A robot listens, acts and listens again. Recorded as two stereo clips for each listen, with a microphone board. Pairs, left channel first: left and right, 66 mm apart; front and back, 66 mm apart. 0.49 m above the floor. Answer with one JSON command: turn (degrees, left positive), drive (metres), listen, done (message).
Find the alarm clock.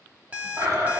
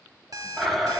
{"turn": -155}
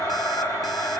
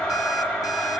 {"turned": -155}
{"listen": true}
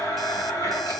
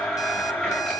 {"listen": true}
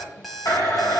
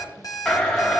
{"done": "Found it: an alarm clock, straight ahead."}